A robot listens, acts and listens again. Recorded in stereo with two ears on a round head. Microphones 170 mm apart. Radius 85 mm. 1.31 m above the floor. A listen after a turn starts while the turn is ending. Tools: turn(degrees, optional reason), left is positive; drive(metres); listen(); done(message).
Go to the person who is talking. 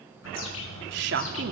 turn(degrees=-65, reason="The woman speaking: about 65° right or 115° right.")
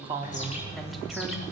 listen()
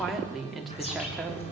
drive(metres=1.0)
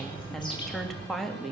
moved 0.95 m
drive(metres=1.0)
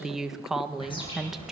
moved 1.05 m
drive(metres=1.0)
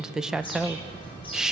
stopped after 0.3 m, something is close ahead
done("Arrived at the woman speaking, straight ahead.")